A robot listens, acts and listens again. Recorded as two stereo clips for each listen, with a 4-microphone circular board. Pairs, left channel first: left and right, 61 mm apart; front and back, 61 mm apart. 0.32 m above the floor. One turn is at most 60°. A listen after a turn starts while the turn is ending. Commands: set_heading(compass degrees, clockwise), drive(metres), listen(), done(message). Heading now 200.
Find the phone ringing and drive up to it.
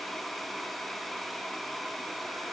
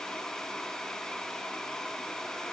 listen()
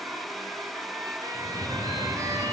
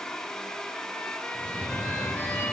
set_heading(260)
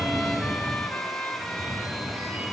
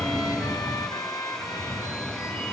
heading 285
set_heading(315)
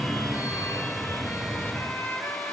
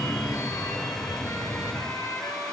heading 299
set_heading(314)
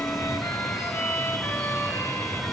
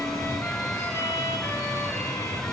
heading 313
drive(1.0)
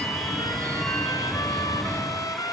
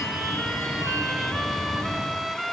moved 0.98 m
drive(1.0)
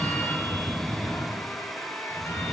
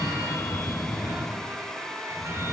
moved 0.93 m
drive(1.0)
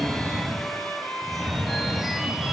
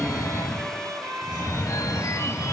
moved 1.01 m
drive(1.0)
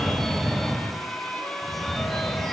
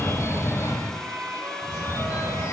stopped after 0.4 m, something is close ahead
done("I am next to the phone ringing.")